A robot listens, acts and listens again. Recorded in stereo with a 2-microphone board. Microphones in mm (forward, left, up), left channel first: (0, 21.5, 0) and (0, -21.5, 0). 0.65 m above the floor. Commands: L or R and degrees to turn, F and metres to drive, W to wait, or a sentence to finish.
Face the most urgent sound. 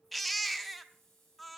L30
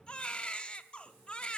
L150
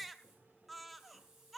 Found it: a baby crying, straight ahead, under 1 m away.